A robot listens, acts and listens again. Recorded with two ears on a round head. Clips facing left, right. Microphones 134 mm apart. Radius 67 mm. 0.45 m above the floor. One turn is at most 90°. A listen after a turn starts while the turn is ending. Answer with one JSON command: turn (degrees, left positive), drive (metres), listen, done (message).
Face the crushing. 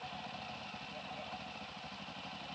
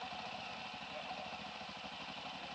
{"listen": true}
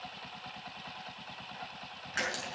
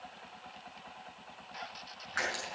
{"turn": 25}
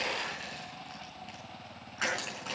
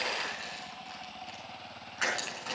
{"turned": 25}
{"done": "Facing the crushing."}